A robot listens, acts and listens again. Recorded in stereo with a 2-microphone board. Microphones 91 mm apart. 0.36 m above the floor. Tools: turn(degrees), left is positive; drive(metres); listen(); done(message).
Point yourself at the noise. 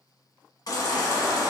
turn(degrees=50)
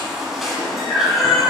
done("Facing the baby crying, under 1 m away.")